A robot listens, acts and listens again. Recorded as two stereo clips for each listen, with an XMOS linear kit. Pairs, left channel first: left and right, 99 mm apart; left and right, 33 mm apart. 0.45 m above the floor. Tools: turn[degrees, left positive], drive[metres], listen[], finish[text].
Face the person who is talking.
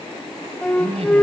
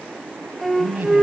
Thought: The man speaking: about 70° right or 110° right.
Action: turn[-70]
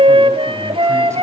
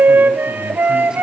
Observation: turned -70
Action: listen[]
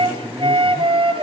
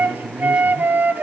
Thought: So it is at 30° right.
Action: turn[-30]
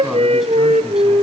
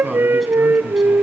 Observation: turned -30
Action: listen[]
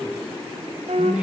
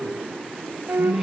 Thought: The man speaking is now 10° right.
Action: turn[-10]
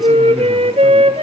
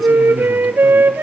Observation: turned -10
Action: listen[]
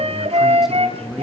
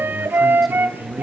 Action: finish[Facing the man speaking.]